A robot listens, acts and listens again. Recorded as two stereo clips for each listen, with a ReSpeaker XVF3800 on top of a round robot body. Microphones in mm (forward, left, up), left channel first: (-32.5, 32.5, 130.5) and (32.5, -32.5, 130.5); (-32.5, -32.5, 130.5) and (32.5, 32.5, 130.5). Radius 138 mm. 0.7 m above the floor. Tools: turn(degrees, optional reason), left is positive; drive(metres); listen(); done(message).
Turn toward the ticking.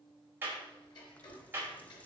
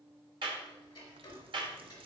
turn(degrees=175, reason="The ticking: 175° left.")
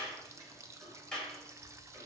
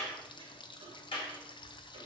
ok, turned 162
turn(degrees=15, reason="Nothing new. It was at 15° left.")
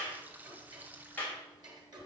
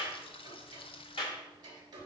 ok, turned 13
done("Facing the ticking.")